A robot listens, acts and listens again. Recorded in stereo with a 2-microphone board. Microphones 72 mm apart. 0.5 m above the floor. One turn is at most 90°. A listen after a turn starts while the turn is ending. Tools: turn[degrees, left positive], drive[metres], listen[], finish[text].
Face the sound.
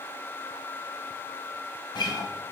Action: turn[90]
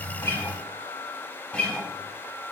Thought: So it is at 15° left.
Action: turn[15]
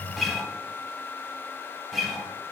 Action: finish[Facing the guitar.]